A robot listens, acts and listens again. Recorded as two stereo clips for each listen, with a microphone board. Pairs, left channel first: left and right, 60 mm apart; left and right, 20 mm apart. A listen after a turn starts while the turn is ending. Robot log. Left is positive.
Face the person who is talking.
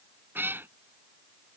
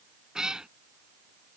cmd idle
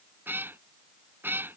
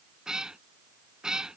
cmd idle
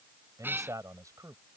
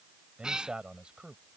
note: The man speaking: about 65° right or 115° right.
cmd yaw -65
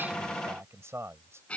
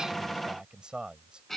note: So it is at 50° right.
cmd yaw -50
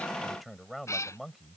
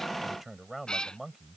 end: Facing the man speaking.